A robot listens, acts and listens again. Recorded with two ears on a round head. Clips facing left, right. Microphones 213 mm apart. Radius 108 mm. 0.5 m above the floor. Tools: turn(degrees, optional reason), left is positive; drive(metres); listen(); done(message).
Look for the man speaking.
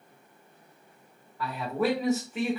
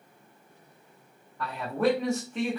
turn(degrees=30)
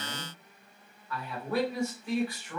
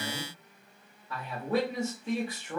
turn(degrees=-25, reason="So it is at 25° right.")
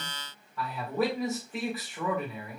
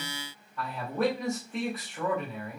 done("Found it: a man speaking, straight ahead.")